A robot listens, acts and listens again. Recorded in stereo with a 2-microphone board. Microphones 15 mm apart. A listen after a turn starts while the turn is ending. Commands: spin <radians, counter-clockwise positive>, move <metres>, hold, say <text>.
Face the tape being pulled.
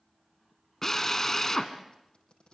spin 1.31
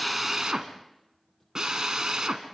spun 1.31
hold
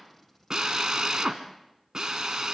hold
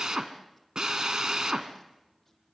say I heard tape being pulled, but can't make it out now. It was about straight ahead or 30° left.